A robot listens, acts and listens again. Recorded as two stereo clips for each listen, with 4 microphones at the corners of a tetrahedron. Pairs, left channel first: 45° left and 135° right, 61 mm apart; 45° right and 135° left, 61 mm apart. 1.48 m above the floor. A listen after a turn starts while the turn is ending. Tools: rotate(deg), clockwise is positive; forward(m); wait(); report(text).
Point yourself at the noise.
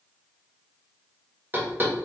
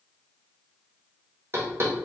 rotate(-175)
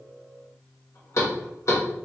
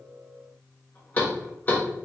rotate(-15)
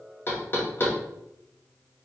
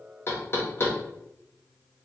report("Facing the knocking, under 1 m away.")